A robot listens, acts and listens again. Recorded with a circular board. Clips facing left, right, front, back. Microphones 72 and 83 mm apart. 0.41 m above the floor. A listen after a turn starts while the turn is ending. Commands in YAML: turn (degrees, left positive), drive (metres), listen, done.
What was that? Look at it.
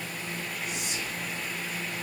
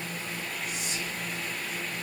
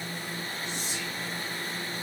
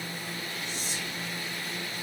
turn: 175
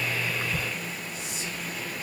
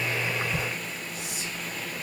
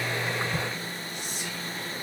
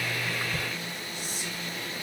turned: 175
turn: 15
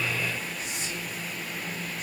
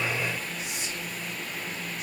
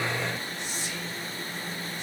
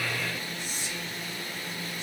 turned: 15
done: "Found it: whispering, straight ahead, 1 to 2 m away."